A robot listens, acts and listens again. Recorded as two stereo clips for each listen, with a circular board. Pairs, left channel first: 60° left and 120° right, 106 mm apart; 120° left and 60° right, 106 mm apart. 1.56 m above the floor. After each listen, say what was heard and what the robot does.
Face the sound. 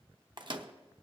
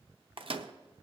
The microwave: 85° right. Turn 85° right.
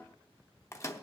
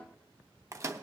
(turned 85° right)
Facing the microwave, under 1 m away.